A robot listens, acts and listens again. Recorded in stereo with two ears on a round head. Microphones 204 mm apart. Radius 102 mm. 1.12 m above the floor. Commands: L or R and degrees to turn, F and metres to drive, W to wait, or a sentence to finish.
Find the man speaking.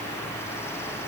W
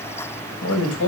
L65
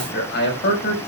L50
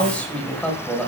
Facing the man speaking.